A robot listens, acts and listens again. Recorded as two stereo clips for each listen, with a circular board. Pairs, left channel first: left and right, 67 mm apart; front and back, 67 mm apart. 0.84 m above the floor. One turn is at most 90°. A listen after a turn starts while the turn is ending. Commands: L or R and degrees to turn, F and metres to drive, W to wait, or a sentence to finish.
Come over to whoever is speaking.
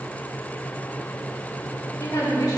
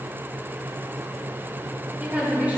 L90
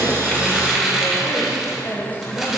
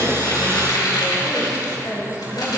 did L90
L35
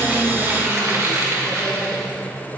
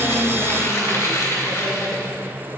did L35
W
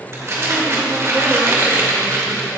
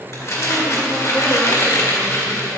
W
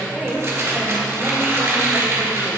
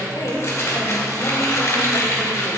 F1.0
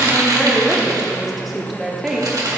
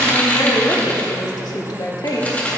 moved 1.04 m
F1.0
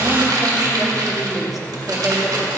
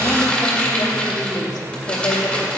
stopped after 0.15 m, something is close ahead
Arrived at the woman speaking, straight ahead.